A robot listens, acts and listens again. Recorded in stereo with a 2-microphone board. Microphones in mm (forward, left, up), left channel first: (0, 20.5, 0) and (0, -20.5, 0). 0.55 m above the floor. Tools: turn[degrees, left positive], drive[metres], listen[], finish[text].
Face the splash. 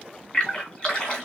Thought: The splash: about 30° left or 150° left.
Action: turn[30]
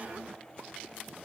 Action: listen[]
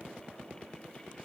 Action: finish[I heard a splash, but can't make it out now. It was about straight ahead or 120° left.]